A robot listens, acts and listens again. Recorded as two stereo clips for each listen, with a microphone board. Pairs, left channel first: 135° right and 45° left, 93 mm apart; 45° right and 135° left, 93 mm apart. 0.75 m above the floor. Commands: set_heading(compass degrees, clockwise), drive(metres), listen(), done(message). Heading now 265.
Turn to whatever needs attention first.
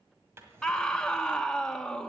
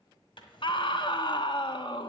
set_heading(320)
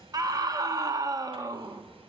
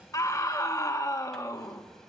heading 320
done("Facing the scream.")